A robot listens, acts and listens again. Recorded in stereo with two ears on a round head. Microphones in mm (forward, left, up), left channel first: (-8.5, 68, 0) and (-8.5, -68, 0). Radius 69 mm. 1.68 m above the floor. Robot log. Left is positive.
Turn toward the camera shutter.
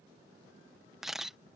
cmd yaw -30
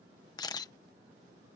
note: So it is at 25° left.
cmd yaw +25
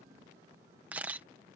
note: The camera shutter is now 10° right.
cmd yaw -10
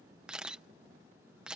end: Found it: a camera shutter, straight ahead.